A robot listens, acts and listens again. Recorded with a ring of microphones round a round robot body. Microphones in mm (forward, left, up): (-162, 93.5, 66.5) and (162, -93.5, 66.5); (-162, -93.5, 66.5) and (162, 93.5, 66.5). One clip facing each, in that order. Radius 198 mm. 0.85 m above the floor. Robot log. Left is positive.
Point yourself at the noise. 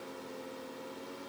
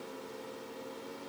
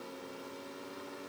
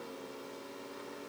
cmd idle
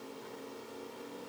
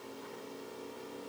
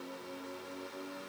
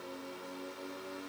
cmd idle
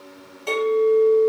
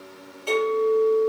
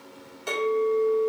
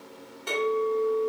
note: The clink: 165° right.
cmd yaw -165
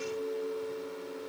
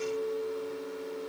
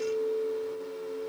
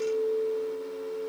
note: The clink is now 30° right.
cmd yaw -30
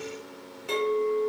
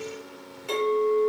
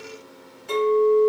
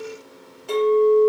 note: The clink is now 20° right.
cmd yaw -20
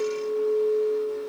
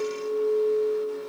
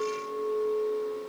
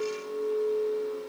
end: Found it: a clink, straight ahead, 1 to 2 m away.